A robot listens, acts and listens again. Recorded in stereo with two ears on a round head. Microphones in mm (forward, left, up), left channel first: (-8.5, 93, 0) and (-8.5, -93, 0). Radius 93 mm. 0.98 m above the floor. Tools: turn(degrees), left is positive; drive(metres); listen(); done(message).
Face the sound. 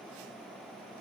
listen()
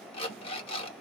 turn(degrees=30)
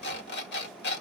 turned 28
turn(degrees=125)
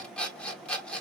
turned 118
done("Facing the alarm clock.")